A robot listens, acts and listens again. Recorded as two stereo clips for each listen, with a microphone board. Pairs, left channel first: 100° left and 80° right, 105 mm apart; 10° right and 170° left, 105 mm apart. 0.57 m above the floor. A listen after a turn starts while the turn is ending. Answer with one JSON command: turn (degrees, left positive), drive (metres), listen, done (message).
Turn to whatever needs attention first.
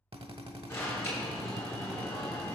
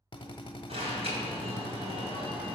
{"turn": 165}
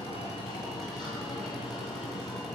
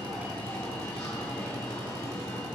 {"turn": 50}
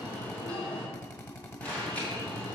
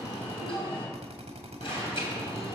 {"turn": 25}
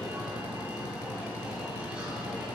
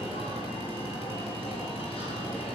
{"done": "Facing the alarm."}